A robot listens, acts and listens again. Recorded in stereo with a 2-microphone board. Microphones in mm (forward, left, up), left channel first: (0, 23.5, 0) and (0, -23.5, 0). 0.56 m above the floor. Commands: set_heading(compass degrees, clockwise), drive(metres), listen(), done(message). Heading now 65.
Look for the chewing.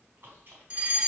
set_heading(115)
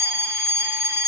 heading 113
listen()
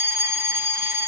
listen()
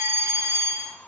done("I heard chewing, but can't make it out now. It was about 5° right or 80° right.")